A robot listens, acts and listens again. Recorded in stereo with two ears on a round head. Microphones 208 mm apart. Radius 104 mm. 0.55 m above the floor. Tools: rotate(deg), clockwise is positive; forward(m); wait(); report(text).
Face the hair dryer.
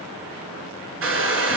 rotate(55)
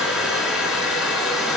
report("Facing the hair dryer.")